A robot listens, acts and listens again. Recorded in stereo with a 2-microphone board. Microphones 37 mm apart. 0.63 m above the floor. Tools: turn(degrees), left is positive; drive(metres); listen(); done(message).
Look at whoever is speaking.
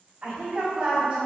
turn(degrees=-35)
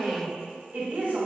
turn(degrees=-105)
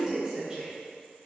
turn(degrees=-20)
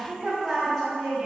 done("Facing the woman speaking, 1 to 2 m away.")